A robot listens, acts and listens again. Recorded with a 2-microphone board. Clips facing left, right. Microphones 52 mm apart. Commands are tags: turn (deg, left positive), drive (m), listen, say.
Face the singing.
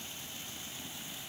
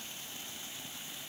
<listen/>
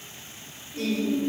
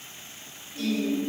<turn deg="55"/>
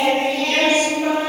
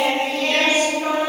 <say>Facing the singing.</say>